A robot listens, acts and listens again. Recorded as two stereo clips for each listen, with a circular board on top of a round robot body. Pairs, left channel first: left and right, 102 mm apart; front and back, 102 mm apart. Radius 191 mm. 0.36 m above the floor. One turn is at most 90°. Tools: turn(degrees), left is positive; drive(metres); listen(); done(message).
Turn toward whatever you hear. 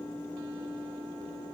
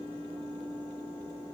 listen()
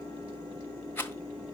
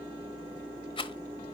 turn(degrees=20)
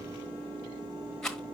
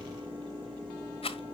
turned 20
done("Facing the rattle, 1 to 2 m away.")